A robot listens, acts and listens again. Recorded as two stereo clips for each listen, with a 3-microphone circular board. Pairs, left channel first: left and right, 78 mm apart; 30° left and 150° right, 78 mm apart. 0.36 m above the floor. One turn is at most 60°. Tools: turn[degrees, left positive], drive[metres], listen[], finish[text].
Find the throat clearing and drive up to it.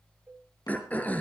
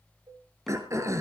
Thought: The throat clearing: 160° left.
Action: turn[60]
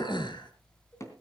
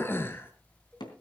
Thought: The throat clearing is now 90° left.
Action: turn[60]
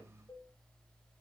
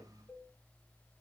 Thought: Nothing new. It was at 30° left.
Action: turn[30]
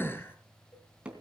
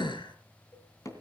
Thought: The throat clearing is now 30° left.
Action: turn[30]
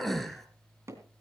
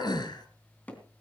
Action: drive[1.0]
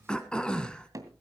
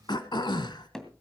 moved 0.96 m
Thought: The throat clearing is now 10° left.
Action: turn[10]
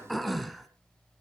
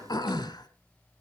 Action: drive[1.0]
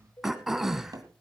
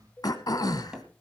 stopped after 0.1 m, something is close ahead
Action: finish[I am next to the throat clearing.]